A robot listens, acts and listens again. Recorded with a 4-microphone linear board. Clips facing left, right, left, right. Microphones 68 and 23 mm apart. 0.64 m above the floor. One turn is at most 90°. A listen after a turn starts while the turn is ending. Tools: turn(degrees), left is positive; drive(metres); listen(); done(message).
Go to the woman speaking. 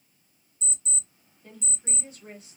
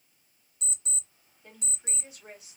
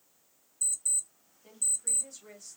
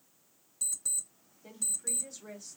turn(degrees=-30)
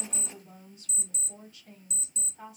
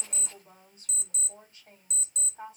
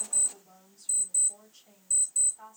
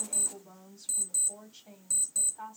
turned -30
turn(degrees=-90)
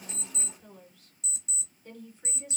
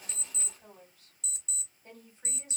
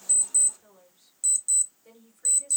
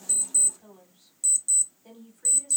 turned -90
turn(degrees=-45)
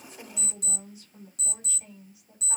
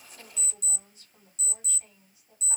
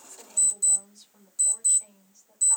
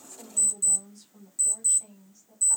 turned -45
drive(metres=1.0)
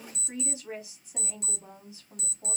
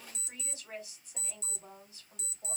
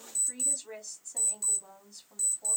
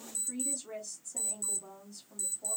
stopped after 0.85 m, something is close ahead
turn(degrees=20)
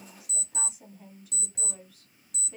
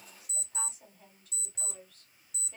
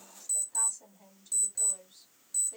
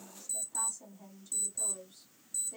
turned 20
turn(degrees=10)
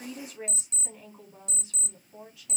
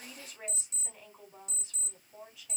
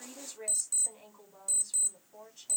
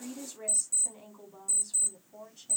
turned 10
done("I am next to the woman speaking.")